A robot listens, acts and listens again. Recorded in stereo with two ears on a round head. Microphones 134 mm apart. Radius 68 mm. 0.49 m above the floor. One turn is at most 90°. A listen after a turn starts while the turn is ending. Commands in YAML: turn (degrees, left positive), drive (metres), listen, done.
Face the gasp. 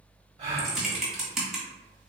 turn: -45
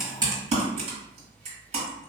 listen: true
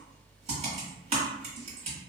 done: "I heard a gasp, but can't make it out now. It was about straight ahead or 90° right."